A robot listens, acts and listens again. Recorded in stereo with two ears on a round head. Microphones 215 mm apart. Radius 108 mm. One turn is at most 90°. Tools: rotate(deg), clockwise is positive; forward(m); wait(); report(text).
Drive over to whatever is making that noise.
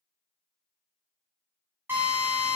rotate(30)
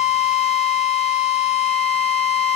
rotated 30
rotate(90)
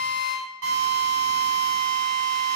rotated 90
rotate(65)
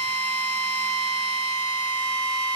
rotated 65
rotate(15)
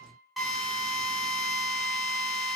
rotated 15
forward(1.0)
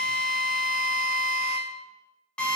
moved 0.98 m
forward(1.0)
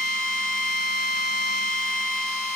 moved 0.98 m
forward(1.0)
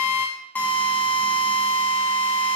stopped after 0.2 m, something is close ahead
rotate(-10)
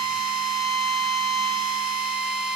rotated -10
report("I am next to the drill.")